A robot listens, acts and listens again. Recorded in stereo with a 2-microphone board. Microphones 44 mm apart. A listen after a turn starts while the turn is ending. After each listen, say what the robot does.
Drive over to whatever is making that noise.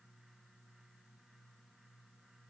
Keep listening.
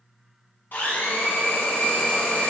Turn 55° left.
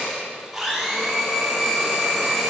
Drive 1.0 m forward.
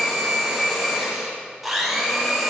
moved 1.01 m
Drive 1.0 m forward.
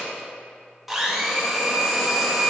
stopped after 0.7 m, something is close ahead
Something is in my way. I am facing the blender but have not reached it.